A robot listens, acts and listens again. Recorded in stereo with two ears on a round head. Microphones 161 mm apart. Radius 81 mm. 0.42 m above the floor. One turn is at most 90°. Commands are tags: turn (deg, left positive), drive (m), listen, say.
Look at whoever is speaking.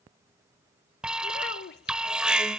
<turn deg="60"/>
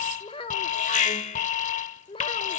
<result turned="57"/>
<turn deg="35"/>
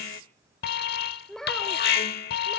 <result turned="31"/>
<say>Found it: a child speaking, straight ahead, under 1 m away.</say>